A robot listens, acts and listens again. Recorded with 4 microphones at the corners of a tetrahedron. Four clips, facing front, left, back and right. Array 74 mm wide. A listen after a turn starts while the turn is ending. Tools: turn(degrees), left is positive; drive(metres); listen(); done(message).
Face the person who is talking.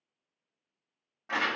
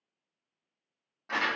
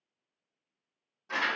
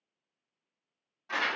listen()
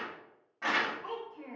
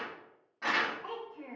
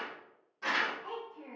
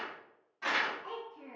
turn(degrees=55)
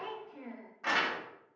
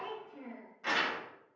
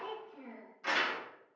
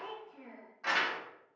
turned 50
done("Found it: a child speaking, straight ahead, 1 to 2 m away.")